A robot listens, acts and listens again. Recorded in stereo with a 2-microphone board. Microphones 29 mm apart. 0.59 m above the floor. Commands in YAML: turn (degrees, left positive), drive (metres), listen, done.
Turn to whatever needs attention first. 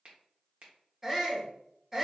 turn: -30
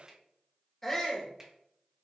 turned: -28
turn: 15
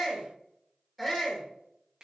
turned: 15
done: "Found it: a shout, straight ahead, 1 to 2 m away."